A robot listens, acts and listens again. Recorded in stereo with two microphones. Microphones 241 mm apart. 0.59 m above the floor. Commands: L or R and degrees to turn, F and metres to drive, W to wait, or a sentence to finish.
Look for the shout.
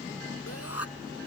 L70
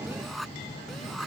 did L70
Found it: a shout, straight ahead.